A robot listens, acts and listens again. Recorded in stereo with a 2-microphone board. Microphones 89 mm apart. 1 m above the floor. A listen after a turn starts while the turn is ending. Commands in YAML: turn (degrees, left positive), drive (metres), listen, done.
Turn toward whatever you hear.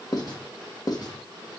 turn: 45
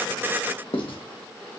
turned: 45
turn: 85
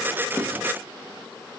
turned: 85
listen: true
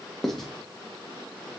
done: "Found it: writing, straight ahead, 1 to 2 m away."